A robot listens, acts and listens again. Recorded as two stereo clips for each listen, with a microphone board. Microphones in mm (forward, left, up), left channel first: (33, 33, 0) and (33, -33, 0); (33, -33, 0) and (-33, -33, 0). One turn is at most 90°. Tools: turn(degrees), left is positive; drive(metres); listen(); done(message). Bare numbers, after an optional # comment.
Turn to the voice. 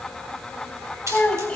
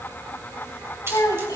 # The child speaking: 20° left.
turn(20)
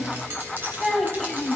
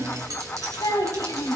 done("Facing the child speaking.")